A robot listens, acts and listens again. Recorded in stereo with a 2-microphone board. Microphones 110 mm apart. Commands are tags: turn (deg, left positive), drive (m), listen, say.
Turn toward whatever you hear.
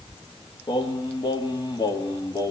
<turn deg="45"/>
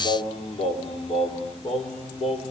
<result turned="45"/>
<turn deg="105"/>
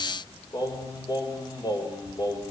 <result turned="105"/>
<turn deg="40"/>
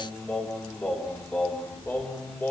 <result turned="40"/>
<turn deg="20"/>
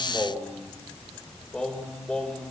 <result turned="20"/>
<say>Found it: singing, straight ahead.</say>